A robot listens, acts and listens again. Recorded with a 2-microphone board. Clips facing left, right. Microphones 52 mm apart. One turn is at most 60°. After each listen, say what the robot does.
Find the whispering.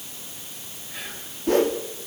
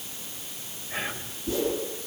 Turn 40° right.
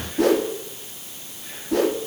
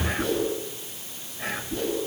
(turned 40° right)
Turn 60° right.
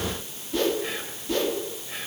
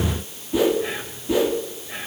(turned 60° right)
Turn 10° right.
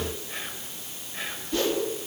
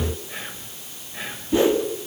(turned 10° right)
Facing the whispering.